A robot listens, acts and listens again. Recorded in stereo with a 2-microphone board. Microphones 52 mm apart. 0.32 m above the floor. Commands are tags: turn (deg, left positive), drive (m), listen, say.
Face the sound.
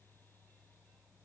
<listen/>
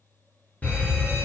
<turn deg="30"/>
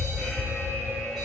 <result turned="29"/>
<say>Facing the fire alarm.</say>